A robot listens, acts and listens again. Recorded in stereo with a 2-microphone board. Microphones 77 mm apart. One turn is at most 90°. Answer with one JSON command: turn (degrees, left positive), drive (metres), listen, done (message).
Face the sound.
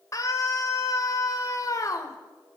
{"turn": 40}
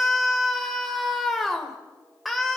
{"done": "Facing the scream, 2 to 4 m away."}